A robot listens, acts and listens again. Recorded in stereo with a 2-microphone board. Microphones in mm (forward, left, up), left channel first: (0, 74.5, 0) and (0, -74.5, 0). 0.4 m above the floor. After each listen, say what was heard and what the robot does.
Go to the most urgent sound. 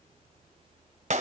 Keep listening.
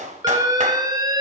The alarm: about 25° right or 155° right. Turn 25° right.
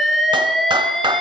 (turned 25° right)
Drive 1.0 m forward.
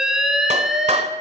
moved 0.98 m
Drive 1.0 m forward.
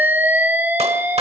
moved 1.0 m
The alarm is now 10° right. Turn 10° right.
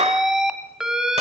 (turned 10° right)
Drive 1.0 m forward.
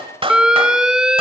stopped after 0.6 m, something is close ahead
Arrived at the alarm, straight ahead.